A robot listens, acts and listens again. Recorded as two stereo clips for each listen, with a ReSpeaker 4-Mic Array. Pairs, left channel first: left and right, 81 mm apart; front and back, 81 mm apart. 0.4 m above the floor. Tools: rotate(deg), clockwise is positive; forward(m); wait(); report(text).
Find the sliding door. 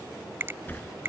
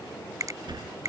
rotate(-155)
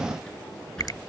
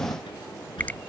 report("Found it: a sliding door, straight ahead.")